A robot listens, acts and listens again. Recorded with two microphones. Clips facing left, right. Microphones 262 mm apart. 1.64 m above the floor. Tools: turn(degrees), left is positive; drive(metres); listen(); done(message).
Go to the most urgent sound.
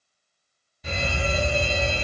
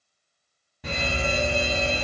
turn(degrees=-90)
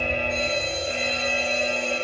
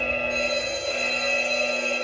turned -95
turn(degrees=20)
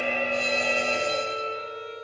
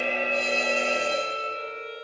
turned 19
drive(metres=1.0)
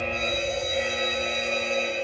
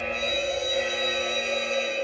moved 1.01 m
drive(metres=1.0)
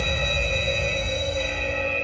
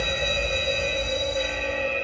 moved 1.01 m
turn(degrees=-15)
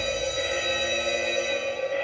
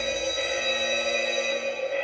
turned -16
drive(metres=1.0)
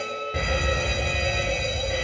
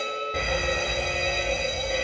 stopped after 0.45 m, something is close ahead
done("I am next to the fire alarm.")